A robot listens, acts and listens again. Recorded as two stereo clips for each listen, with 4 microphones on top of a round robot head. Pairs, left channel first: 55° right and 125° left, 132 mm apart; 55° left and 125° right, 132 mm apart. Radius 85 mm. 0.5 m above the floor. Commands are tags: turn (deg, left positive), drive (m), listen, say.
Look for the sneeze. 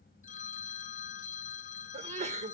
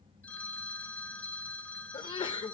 <turn deg="105"/>
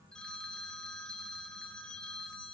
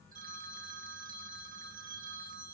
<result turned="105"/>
<say>I heard a sneeze from this way, but can't make it out now.</say>